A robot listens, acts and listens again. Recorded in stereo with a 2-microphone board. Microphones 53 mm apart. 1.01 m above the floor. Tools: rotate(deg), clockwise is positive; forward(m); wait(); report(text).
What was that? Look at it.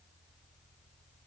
wait()
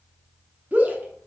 rotate(30)
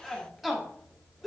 report("Found it: a shout, straight ahead.")